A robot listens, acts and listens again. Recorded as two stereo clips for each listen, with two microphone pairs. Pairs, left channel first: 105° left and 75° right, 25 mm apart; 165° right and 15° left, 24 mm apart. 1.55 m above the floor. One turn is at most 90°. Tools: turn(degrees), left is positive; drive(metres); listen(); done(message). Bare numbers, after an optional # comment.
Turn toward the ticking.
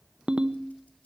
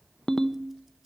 listen()
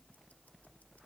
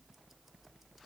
listen()
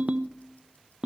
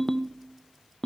done("I can't make out ticking, only a ringtone.")